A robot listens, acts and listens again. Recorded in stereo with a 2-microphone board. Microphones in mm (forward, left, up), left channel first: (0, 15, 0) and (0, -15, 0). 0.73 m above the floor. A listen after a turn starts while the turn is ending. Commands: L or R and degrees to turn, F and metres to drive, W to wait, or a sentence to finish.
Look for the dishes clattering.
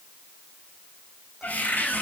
W
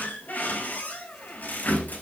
W
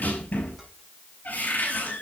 I can't make out dishes clattering, only a cupboard door.